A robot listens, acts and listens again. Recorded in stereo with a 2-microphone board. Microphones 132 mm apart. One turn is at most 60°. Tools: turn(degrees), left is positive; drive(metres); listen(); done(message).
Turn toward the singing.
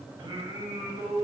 turn(degrees=-30)
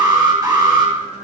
turn(degrees=-60)
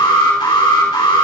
turn(degrees=-60)
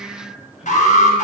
done("Found it: singing, straight ahead.")